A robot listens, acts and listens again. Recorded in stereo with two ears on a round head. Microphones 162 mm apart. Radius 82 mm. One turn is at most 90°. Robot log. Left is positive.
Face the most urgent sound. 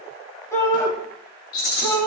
note: The shout: about 15° left or 165° left.
cmd yaw +15
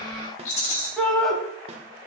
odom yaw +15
end: Facing the shout.